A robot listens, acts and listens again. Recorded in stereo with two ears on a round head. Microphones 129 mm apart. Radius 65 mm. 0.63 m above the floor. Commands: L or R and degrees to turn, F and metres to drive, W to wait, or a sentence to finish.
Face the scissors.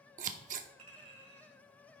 R55
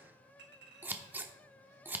R15
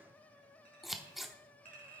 Found it: scissors, straight ahead, under 1 m away.